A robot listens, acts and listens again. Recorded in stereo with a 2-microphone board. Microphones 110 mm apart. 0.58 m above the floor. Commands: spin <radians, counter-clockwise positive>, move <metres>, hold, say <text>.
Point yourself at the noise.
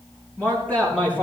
spin 0.52
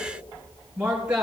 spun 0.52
spin -0.17
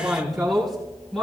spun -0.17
say Found it: a man speaking, straight ahead.